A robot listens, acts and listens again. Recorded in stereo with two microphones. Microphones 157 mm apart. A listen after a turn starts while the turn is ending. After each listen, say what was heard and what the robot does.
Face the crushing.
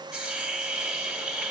Keep listening.
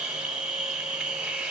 Keep listening.
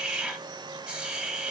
I can't make out crushing, only a hiss.